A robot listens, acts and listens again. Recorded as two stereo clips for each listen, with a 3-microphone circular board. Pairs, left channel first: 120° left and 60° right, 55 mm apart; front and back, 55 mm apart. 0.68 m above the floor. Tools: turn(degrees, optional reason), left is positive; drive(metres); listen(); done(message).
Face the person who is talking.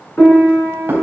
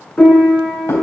listen()
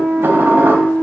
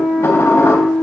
listen()
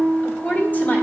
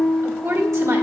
turn(degrees=170, reason="The woman speaking: 170° left.")
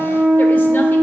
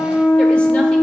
listen()
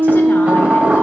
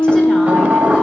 listen()
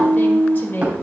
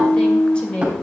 turn(degrees=70, reason="The woman speaking is now 70° left.")
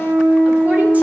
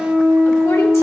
listen()
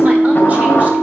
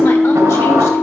listen()
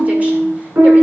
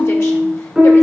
done("I heard a woman speaking from this way, but can't make it out now.")